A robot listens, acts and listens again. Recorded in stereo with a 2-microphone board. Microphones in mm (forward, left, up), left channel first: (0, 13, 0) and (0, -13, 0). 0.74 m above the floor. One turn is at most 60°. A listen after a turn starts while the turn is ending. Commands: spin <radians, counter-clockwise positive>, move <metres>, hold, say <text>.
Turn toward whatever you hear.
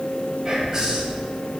spin -0.35
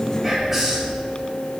say Found it: whispering, straight ahead, 1 to 2 m away.